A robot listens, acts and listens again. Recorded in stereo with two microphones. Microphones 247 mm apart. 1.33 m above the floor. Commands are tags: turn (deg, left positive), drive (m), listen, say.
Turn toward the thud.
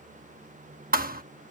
<turn deg="-40"/>
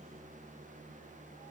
<listen/>
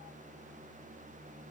<say>I heard a thud, but can't make it out now. It was about straight ahead or 100° right.</say>